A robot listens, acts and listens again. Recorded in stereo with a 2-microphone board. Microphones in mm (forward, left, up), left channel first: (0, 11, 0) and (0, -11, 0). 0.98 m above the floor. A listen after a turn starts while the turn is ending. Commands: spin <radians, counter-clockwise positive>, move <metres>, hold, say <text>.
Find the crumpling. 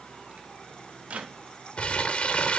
spin 0.96
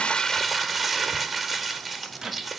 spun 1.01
say Facing the crumpling, under 1 m away.